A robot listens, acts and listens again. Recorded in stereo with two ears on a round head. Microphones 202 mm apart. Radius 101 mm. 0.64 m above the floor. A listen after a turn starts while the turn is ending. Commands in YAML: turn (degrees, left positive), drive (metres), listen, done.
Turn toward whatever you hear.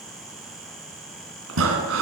turn: -65
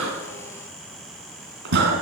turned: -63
turn: -50
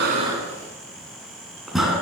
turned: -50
done: "Facing the breathing, 2 to 4 m away."